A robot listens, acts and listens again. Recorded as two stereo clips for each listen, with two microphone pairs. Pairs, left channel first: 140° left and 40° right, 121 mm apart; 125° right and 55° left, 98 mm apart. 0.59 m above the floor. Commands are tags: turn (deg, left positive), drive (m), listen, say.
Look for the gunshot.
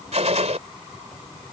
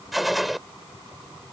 <turn deg="-35"/>
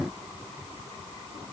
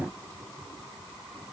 <say>Facing where the gunshot came from. I can't hear it now.</say>